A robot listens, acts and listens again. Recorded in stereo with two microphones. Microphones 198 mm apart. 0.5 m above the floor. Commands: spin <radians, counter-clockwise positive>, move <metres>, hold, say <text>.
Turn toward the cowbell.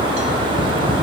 hold
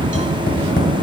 hold
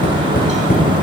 say I can't make out a cowbell to turn to.